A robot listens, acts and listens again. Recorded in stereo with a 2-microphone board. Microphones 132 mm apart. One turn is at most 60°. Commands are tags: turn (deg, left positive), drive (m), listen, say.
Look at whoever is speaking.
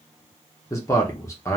<turn deg="20"/>
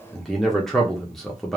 <say>Facing the man speaking.</say>